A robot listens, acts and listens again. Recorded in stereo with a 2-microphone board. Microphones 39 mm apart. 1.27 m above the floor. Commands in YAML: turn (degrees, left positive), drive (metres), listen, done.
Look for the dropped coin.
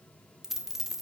turn: -30
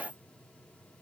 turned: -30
listen: true
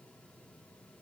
done: "I heard a dropped coin, but can't make it out now. It was about 20° left or 140° right."